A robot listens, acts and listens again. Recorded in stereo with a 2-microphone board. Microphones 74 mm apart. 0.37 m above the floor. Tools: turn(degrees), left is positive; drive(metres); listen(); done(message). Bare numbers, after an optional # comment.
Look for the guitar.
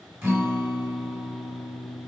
# The guitar: about 35° right or 145° right.
turn(-35)
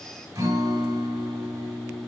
# So it is at 105° right.
turn(-105)
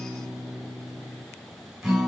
done("Facing the guitar.")